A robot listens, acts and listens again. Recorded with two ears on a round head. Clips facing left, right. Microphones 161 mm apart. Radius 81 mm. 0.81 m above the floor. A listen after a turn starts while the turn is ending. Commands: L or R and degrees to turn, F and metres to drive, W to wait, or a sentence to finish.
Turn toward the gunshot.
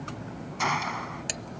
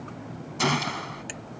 R45
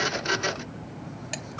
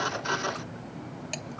W
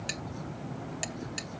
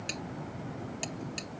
I heard a gunshot, but can't make it out now. It was about straight ahead or 90° right.